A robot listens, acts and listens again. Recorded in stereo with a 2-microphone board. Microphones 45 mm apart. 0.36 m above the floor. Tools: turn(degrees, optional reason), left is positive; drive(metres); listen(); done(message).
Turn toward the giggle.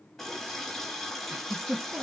turn(degrees=-75, reason="The giggle: about 75° right or 105° right.")
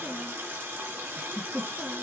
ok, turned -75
turn(degrees=-30, reason="So it is at 30° right.")
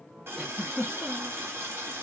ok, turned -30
done("Facing the giggle, 1 to 2 m away.")